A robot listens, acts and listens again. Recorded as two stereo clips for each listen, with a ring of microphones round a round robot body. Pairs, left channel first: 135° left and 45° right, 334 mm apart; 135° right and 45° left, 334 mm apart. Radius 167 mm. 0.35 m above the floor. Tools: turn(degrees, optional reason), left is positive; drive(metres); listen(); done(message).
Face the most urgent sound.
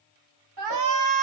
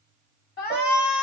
turn(degrees=-75, reason="The shout: 75° right.")
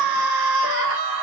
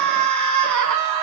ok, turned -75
done("Facing the shout.")